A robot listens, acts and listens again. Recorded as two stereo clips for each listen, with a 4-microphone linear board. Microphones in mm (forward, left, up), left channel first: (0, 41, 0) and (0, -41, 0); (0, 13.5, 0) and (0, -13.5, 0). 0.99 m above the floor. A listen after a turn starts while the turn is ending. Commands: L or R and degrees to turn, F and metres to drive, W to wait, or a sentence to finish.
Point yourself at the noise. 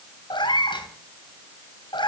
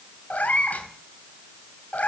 L90
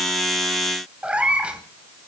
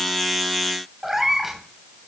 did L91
R15
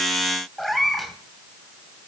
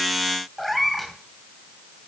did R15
Found it: a cat meowing, straight ahead, 2 to 4 m away.